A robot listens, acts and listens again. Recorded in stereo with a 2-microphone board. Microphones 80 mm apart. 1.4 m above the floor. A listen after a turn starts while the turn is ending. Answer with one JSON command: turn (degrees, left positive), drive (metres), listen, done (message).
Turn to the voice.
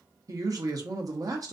{"turn": -50}
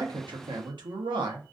{"turn": -85}
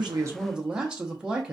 {"turn": -10}
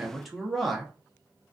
{"done": "Facing the man speaking, under 1 m away."}